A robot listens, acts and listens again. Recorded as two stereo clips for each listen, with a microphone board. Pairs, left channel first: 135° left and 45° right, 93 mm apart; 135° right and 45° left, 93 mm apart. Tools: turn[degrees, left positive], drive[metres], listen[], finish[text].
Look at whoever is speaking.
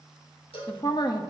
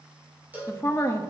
Thought: The woman speaking: 170° left.
Action: turn[170]
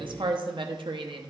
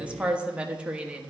Thought: The woman speaking is now 30° right.
Action: turn[-30]
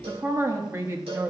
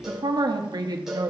Thought: The woman speaking is now 10° left.
Action: turn[10]
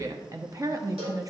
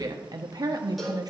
Action: finish[Found it: a woman speaking, straight ahead.]